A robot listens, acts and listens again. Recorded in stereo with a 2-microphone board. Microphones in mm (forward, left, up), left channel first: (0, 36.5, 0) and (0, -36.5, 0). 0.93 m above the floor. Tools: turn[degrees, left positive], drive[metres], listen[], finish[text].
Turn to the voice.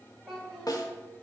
Action: turn[30]
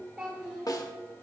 Action: turn[-30]
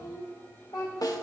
Thought: So it is at 75° left.
Action: turn[75]
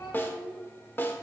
Thought: The child speaking is now 40° left.
Action: turn[40]
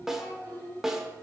Action: finish[Found it: a child speaking, straight ahead, 2 to 4 m away.]